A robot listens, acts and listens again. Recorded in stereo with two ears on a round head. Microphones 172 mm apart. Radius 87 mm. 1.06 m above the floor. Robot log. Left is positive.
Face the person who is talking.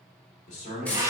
note: The man speaking: about 40° left or 140° left.
cmd yaw +40
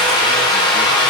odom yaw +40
cmd idle
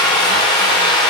cmd idle
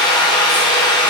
end: I heard a man speaking, but can't make it out now. It was about straight ahead or 100° left.